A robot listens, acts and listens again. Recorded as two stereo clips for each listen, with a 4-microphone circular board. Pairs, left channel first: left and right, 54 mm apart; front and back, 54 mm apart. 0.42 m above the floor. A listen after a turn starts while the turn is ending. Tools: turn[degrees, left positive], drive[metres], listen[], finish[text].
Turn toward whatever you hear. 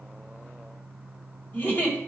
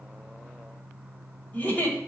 Thought: The giggle: 50° left.
Action: turn[50]
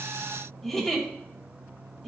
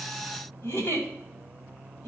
Action: finish[Facing the giggle, 2 to 4 m away.]